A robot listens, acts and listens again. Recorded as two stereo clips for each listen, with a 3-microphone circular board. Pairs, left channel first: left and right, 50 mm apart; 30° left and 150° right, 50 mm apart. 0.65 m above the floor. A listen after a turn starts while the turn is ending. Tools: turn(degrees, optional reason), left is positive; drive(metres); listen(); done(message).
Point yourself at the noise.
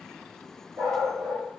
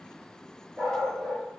turn(degrees=-90, reason="The dog barking: 90° right.")
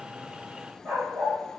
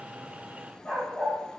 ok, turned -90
turn(degrees=-40, reason="The dog barking is now 40° right.")
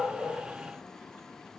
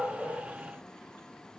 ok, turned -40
listen()
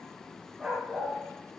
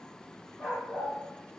turn(degrees=-10, reason="The dog barking is now 10° right.")
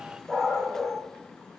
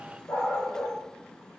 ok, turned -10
turn(degrees=-10, reason="The dog barking is now 10° right.")
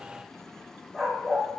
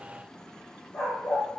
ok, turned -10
done("Facing the dog barking, over 4 m away.")